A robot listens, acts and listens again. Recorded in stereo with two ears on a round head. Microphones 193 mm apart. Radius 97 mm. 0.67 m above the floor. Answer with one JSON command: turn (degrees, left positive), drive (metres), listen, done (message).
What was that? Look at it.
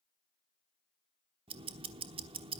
{"turn": -25}
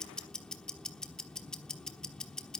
{"done": "Facing the ticking, 1 to 2 m away."}